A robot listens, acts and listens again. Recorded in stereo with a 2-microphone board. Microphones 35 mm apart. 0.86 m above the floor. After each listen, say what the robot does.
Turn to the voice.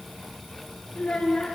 Turn 35° left.
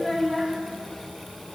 Facing the child speaking.